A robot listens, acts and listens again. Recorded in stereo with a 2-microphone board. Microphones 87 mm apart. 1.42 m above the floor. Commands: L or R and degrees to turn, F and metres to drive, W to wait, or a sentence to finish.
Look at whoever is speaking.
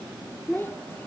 L25
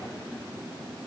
W
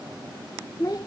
L125
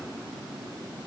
W
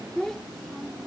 Facing the child speaking.